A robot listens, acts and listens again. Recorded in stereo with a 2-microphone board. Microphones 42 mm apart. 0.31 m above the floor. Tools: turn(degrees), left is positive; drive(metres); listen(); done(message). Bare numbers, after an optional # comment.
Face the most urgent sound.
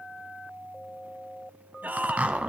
# The shout: about 45° right or 135° right.
turn(-45)
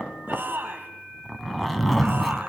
# So it is at 85° right.
turn(-85)
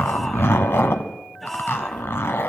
done("Facing the shout.")